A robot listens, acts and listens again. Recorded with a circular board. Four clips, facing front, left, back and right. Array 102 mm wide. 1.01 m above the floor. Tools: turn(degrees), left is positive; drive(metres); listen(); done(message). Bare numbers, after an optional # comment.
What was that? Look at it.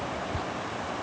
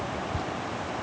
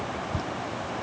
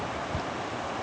# The dripping: 145° right.
turn(-145)
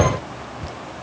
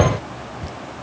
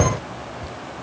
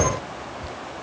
# The dripping is now 25° left.
turn(25)
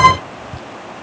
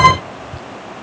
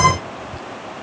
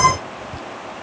done("Found it: dripping, straight ahead.")